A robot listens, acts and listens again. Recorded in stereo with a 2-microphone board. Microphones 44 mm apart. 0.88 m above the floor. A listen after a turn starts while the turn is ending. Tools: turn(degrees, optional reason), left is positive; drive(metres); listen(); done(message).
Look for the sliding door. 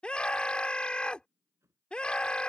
turn(degrees=-90)
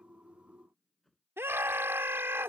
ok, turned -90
done("Found it: a sliding door, straight ahead.")